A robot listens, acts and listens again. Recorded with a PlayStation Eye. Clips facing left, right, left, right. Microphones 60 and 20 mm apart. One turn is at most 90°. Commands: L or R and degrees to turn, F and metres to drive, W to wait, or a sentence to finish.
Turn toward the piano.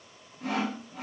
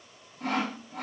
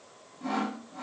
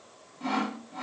W
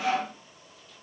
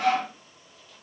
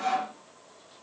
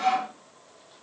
W
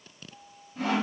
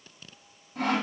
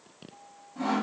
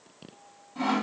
L40
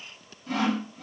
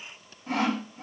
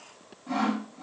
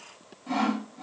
W
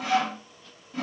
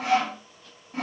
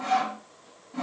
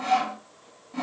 W
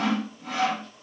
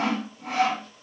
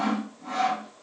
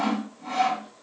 I heard a piano, but can't make it out now. It was about straight ahead or 100° left.